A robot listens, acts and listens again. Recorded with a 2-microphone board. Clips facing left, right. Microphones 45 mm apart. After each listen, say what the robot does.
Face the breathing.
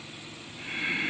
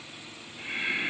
Turn 30° right.
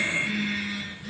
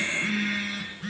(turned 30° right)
Keep listening.
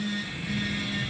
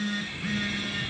Turn 140° right.
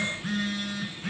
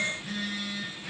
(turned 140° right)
Keep listening.
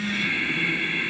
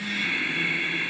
Turn 30° left.
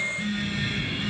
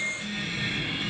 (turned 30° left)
Turn 10° right.
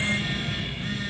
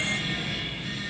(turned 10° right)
Facing the breathing, over 4 m away.